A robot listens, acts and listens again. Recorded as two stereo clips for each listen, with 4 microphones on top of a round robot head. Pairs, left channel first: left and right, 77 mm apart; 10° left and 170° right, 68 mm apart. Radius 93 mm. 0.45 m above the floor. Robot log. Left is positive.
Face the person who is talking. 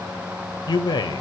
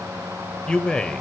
note: The man speaking: 85° left.
cmd yaw +85
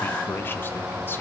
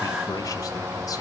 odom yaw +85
cmd idle
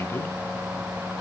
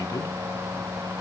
cmd idle
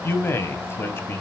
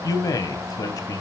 note: The man speaking is now 35° left.
cmd yaw +35
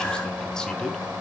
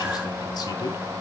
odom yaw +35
cmd idle
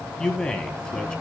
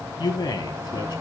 note: The man speaking is now 10° left.
cmd yaw +10
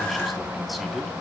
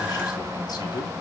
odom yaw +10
cmd idle
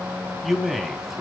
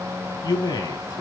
end: Found it: a man speaking, straight ahead, 2 to 4 m away.